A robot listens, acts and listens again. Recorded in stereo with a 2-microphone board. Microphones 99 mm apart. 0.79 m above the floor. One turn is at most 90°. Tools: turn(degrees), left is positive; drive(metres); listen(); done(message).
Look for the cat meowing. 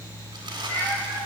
turn(degrees=20)
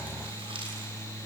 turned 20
listen()
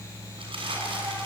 listen()
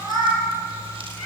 done("Found it: a cat meowing, straight ahead.")